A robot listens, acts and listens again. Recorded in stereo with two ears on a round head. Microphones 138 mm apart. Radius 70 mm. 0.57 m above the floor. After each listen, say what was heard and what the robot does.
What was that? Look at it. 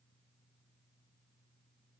Keep listening.
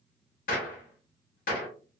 The gunshot: about 55° left or 125° left. Turn 55° left.
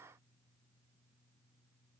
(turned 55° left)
Keep listening.
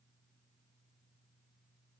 I heard a gunshot, but can't make it out now. It was about straight ahead or 70° left.